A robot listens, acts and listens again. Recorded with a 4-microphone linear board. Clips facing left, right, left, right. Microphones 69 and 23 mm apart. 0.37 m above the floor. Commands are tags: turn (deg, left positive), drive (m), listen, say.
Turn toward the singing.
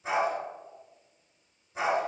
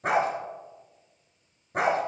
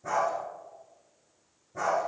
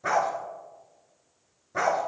<listen/>
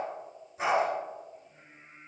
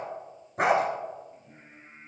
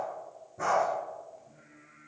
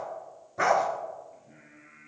<turn deg="-60"/>
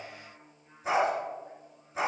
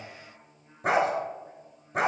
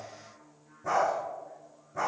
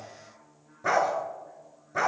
<say>Found it: singing, straight ahead.</say>